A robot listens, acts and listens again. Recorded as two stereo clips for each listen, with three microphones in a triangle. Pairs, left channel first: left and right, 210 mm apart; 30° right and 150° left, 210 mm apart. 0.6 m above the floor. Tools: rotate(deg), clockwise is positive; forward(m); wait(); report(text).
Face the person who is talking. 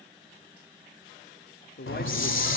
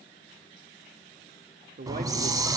rotate(-115)
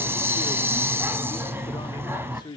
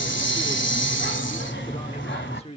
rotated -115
rotate(-25)
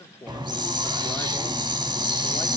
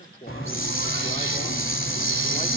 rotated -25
rotate(-15)
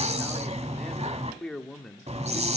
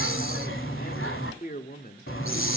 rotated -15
report("Found it: a man speaking, straight ahead.")